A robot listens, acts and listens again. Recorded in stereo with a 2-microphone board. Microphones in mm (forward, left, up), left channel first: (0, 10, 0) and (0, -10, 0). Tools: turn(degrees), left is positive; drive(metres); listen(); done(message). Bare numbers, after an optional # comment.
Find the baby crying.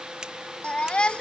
# The baby crying: about 70° left or 110° left.
turn(70)
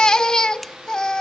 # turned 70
# So it is at 40° left.
turn(40)
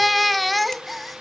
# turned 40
done("Facing the baby crying.")